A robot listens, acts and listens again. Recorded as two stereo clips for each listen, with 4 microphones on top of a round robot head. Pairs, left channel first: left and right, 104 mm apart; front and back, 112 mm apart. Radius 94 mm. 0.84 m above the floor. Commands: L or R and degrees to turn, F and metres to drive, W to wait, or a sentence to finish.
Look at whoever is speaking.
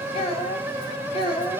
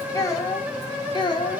L45
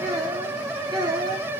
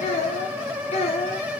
R40
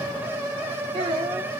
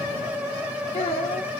R45
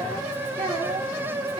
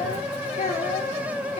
R30
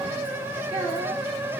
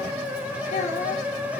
W
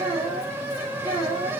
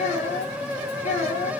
R15
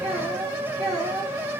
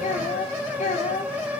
Found it: a child speaking, straight ahead.